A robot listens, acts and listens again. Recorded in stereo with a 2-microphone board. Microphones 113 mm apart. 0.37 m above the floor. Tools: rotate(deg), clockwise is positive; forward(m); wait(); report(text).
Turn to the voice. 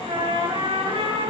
wait()
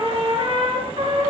wait()
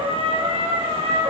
report("I can't make out anyone speaking to turn to.")